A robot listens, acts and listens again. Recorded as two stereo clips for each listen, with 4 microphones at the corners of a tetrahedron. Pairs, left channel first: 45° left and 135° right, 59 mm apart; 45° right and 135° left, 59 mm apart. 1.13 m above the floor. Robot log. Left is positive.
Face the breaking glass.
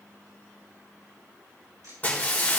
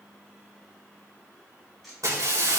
note: The breaking glass: 110° left.
cmd yaw +110
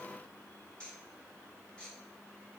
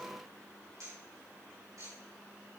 end: Facing where the breaking glass came from. I can't hear it now.